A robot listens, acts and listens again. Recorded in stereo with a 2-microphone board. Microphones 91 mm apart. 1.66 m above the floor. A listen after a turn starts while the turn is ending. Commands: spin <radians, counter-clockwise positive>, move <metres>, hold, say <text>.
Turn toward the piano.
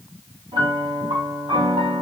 spin -1.57
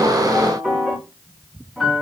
say Found it: a piano, straight ahead.